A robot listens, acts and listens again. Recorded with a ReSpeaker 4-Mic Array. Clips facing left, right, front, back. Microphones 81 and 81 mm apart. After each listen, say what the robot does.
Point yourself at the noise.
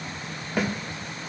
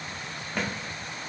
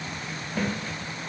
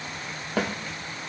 Turn 175° left.
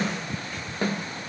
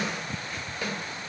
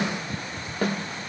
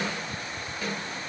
Turn 40° left.
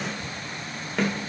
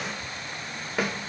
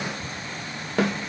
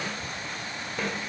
Turn 10° right.
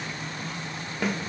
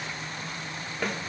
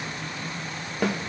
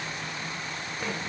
Found it: a snare drum, straight ahead.